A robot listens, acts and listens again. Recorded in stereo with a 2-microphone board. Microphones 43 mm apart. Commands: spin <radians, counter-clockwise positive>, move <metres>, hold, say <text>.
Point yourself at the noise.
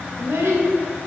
spin -1.57
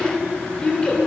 spin 0.44
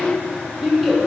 say Found it: a child speaking, straight ahead.